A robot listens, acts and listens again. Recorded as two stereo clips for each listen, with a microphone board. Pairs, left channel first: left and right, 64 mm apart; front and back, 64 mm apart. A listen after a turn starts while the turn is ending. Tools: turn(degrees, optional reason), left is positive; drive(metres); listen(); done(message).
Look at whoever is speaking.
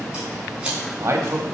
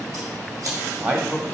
turn(degrees=-125, reason="The man speaking: 125° right.")
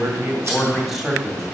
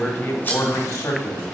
done("Facing the man speaking.")